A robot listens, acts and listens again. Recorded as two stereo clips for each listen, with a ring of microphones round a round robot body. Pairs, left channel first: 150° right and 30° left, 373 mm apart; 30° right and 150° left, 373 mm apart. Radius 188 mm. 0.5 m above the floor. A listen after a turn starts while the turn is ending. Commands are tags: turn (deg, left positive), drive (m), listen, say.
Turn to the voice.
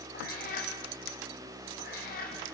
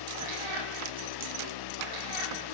<listen/>
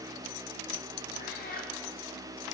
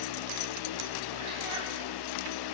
<listen/>
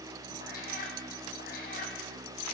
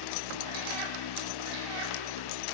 <say>I can't make out anyone speaking to turn to.</say>